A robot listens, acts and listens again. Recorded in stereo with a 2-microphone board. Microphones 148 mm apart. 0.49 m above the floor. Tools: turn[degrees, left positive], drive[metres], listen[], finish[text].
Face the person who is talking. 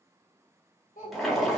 Thought: The child speaking: about 65° left or 115° left.
Action: turn[65]
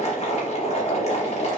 Action: listen[]
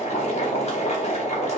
Action: listen[]
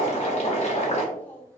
Thought: So it is at 15° left.
Action: turn[15]
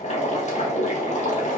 Action: listen[]
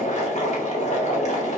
Action: listen[]
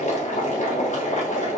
Action: finish[I heard a child speaking from this way, but can't make it out now.]